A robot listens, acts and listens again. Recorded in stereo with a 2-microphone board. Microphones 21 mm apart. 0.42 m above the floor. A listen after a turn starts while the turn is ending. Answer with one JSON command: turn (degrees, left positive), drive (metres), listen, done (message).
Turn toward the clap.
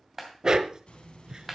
{"turn": -30}
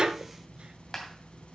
{"turn": 15}
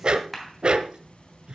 {"done": "Found it: a clap, straight ahead, 2 to 4 m away."}